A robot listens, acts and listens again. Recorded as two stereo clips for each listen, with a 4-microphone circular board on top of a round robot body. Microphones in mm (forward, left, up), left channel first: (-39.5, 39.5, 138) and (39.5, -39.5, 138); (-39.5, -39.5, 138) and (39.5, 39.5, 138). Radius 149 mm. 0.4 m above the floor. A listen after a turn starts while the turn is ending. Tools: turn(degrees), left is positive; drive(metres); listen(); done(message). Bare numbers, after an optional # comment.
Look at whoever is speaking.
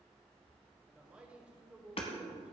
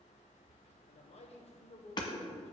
# The man speaking: 125° right.
turn(-125)
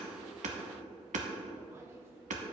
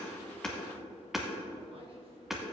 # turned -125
listen()
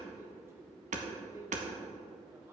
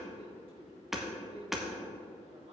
# The man speaking is now 20° left.
turn(20)
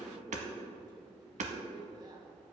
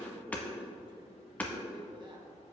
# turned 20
listen()
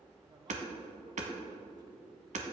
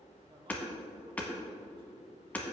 listen()
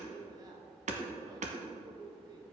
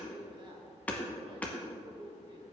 done("Found it: a man speaking, straight ahead.")